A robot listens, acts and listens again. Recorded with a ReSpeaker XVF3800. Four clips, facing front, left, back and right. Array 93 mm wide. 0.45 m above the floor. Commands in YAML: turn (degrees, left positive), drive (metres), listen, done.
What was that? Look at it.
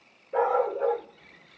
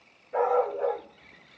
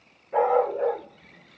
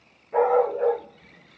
turn: -145
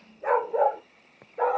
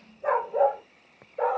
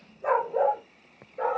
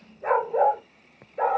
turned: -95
turn: -70
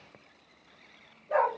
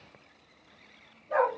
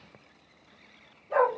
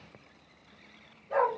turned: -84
done: "Facing the dog barking."